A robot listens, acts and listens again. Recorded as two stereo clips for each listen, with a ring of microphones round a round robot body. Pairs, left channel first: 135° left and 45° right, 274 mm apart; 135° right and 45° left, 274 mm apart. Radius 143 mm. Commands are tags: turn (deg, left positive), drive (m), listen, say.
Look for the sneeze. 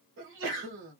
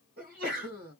<turn deg="-10"/>
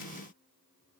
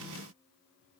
<say>I heard a sneeze from this way, but can't make it out now.</say>